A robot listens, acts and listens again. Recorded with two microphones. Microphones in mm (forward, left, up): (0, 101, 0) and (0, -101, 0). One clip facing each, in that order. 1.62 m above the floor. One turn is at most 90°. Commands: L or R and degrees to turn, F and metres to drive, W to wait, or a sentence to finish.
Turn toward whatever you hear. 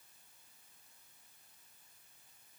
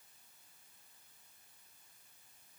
W
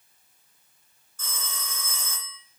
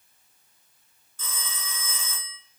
L45
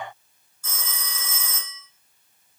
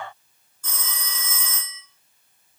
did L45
Found it: a phone ringing, straight ahead.